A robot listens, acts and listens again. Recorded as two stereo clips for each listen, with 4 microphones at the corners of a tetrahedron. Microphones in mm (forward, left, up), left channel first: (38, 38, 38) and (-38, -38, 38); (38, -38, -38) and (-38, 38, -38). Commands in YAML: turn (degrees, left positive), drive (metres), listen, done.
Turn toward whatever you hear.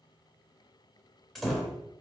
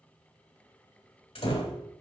turn: -45
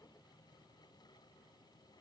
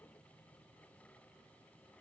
done: "I heard a door slam from this way, but can't make it out now."